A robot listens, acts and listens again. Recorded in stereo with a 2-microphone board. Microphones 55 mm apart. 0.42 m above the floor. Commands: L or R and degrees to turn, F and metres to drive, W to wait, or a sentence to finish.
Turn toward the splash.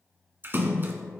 R40
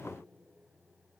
W
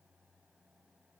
I heard a splash, but can't make it out now. It was about straight ahead or 100° right.